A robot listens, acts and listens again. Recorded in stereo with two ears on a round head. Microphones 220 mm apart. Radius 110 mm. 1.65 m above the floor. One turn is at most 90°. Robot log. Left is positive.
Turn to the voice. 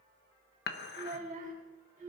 note: The child speaking: about 35° right or 145° right.
cmd yaw -35
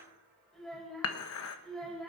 end: Facing the child speaking, over 4 m away.